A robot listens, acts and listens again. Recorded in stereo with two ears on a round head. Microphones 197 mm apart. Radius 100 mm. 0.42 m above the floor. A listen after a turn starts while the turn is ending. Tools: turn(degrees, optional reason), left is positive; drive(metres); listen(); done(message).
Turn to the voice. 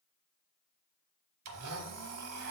listen()
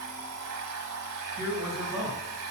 turn(degrees=-45, reason="The man speaking: about 45° right or 135° right.")
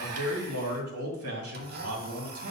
turn(degrees=-85, reason="So it is at 85° right.")
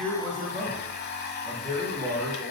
done("Found it: a man speaking, straight ahead, 2 to 4 m away.")